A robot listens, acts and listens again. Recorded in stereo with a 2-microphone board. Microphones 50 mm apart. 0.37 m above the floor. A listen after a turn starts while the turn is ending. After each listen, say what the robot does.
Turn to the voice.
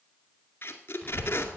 Turn 15° left.
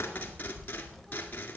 Found it: a child speaking, straight ahead.